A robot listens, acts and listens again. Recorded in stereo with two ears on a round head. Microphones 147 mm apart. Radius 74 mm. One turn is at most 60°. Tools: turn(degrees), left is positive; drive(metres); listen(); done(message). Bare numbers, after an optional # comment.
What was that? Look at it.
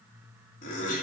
# The laughter: about 55° left or 125° left.
turn(55)
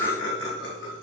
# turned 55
# So it is at 75° left.
turn(60)
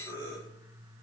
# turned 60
# The laughter is now 25° left.
turn(25)
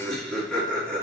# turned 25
done("Found it: laughter, straight ahead.")